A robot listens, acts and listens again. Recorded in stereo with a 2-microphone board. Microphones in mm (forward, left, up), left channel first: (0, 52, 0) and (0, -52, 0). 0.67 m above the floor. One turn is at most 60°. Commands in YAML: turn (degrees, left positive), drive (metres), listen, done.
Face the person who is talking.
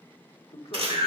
turn: 60
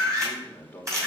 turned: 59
turn: 15
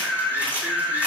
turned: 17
listen: true
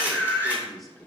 done: "Found it: a man speaking, straight ahead, 1 to 2 m away."